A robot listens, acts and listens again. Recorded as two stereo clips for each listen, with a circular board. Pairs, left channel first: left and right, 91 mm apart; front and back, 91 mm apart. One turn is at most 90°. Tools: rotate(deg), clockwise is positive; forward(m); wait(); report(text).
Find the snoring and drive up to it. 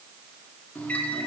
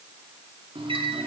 wait()
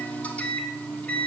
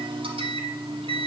wait()
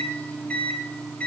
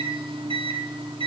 report("I can't make out snoring, only a microwave.")